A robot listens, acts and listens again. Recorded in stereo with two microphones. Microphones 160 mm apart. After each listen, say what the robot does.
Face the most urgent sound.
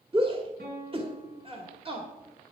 Turn 35° right.
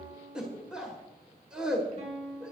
Found it: a shout, straight ahead, 1 to 2 m away.